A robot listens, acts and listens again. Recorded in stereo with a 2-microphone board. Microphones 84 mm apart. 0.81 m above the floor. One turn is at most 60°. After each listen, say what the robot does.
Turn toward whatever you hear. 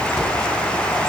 Turn 30° right.
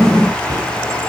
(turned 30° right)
Turn 60° right.
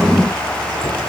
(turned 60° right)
Turn 60° right.
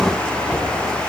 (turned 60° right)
Turn 15° right.
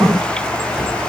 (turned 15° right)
Facing the cupboard door, 2 to 4 m away.